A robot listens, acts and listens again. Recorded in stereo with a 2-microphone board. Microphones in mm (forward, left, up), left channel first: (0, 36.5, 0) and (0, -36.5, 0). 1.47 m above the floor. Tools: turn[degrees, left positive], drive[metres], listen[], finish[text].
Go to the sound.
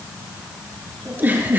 Thought: The giggle: about 30° right or 150° right.
Action: turn[-30]
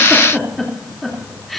Action: drive[1.0]
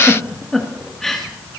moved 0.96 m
Action: drive[1.0]
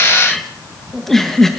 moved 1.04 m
Action: drive[1.0]
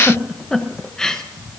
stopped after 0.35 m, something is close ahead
Thought: The giggle is now 10° left.
Action: turn[10]
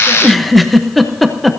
Action: finish[Arrived at the giggle, straight ahead.]